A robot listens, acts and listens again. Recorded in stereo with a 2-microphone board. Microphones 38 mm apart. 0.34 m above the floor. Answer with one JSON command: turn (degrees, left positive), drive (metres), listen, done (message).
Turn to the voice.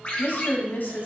{"turn": 60}
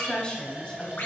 {"turn": 30}
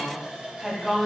{"done": "Facing the woman speaking."}